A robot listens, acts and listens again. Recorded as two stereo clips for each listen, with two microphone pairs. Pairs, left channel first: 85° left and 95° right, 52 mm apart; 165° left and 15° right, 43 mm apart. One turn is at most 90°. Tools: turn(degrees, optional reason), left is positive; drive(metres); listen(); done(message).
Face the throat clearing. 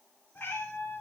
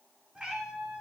listen()
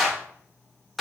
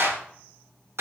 listen()
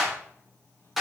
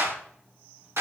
done("I can't make out throat clearing, only a cat meowing and a clap.")